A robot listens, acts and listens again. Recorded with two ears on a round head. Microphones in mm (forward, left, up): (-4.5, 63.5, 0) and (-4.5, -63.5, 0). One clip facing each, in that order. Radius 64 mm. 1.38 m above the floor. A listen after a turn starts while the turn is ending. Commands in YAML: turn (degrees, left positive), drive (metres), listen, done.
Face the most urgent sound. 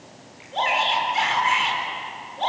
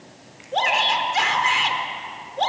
turn: -60
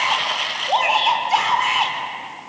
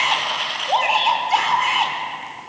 done: "Found it: a shout, straight ahead, over 4 m away."